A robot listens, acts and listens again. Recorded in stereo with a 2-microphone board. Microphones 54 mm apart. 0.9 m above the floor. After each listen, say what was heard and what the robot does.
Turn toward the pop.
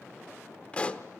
The pop: about 20° left or 160° left. Turn 20° left.
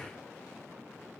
Keep listening.
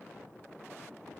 I heard a pop, but can't make it out now. It was about straight ahead or 140° left.